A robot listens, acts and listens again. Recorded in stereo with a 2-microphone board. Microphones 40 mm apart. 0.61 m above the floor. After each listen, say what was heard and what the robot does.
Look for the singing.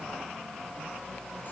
Keep listening.
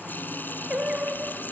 The singing: about 20° right or 160° right. Turn 20° right.
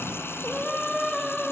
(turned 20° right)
Found it: singing, straight ahead.